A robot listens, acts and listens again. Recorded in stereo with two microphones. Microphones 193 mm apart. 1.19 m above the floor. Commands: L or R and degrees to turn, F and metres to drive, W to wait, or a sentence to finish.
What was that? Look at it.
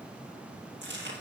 R90
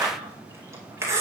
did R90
R15
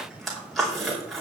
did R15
Found it: chewing, straight ahead, over 4 m away.